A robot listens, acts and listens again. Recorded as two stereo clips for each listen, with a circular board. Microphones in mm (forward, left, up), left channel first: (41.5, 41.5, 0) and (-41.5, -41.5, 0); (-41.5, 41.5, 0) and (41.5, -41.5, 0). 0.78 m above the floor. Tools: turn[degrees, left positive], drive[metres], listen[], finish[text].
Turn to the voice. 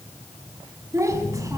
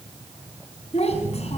Thought: The child speaking: 160° left.
Action: turn[160]
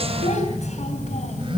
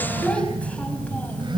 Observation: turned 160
Action: listen[]
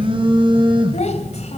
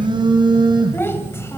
Thought: The child speaking is now 65° left.
Action: turn[65]
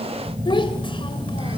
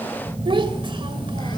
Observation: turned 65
Action: finish[Found it: a child speaking, straight ahead, 2 to 4 m away.]